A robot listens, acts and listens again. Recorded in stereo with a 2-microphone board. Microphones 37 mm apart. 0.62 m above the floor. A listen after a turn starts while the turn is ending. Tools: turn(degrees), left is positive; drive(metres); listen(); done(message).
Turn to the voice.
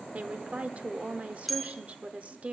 turn(degrees=-35)
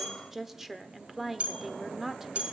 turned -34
turn(degrees=-10)
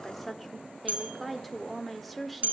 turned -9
done("Facing the woman speaking, 1 to 2 m away.")